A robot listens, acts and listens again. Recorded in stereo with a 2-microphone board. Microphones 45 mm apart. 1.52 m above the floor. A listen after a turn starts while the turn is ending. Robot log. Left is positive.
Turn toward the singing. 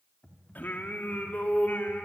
note: The singing: about 45° left or 135° left.
cmd yaw +45
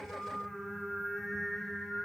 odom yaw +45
end: Facing the singing.